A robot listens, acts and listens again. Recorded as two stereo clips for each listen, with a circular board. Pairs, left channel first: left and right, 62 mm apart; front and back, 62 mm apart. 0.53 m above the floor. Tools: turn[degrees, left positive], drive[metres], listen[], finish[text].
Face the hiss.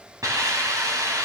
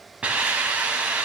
Thought: The hiss: 110° right.
Action: turn[-110]
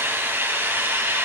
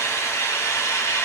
Thought: The hiss is now 35° right.
Action: turn[-35]
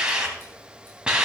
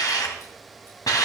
Thought: The hiss is now 15° right.
Action: turn[-15]
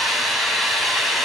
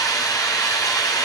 Action: finish[Facing the hiss.]